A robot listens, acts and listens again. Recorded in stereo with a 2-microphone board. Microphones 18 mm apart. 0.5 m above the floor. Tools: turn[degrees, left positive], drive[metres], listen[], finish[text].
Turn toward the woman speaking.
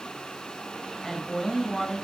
Thought: The woman speaking: about 15° left or 165° left.
Action: turn[15]
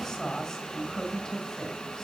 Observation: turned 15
Thought: So it is at 150° left.
Action: turn[150]
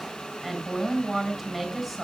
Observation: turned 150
Action: finish[Found it: a woman speaking, straight ahead, over 4 m away.]